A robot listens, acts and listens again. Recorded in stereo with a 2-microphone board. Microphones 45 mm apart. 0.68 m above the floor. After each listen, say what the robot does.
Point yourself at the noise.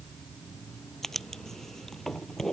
Turn 30° left.
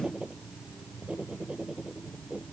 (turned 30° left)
Turn 25° right.
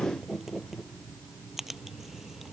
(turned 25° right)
Turn 10° right.
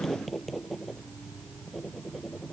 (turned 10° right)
Facing the writing.